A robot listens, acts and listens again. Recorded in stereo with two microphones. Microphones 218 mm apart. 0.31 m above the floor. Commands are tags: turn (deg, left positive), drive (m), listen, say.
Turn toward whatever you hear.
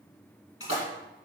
<turn deg="70"/>
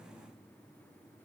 <listen/>
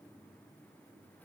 <say>I heard a splash, but can't make it out now. It was about straight ahead or 40° left.</say>